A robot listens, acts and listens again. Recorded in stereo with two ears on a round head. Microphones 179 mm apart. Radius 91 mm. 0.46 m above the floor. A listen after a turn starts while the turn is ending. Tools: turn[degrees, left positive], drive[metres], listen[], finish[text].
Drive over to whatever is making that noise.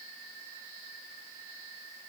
Action: listen[]
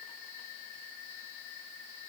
Action: listen[]
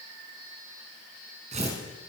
Thought: The tearing paper: about 35° right or 145° right.
Action: turn[-35]
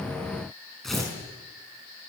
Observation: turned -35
Action: drive[1.0]
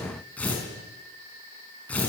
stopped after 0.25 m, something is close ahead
Action: finish[Blocked. The tearing paper is further on, straight ahead.]